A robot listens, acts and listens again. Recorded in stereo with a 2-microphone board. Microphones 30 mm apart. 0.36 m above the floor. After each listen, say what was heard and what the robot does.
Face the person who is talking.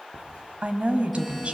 The woman speaking: about 50° right or 130° right. Turn 50° right.
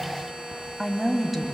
So it is at 10° right. Turn 10° right.
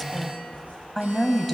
Found it: a woman speaking, straight ahead, 2 to 4 m away.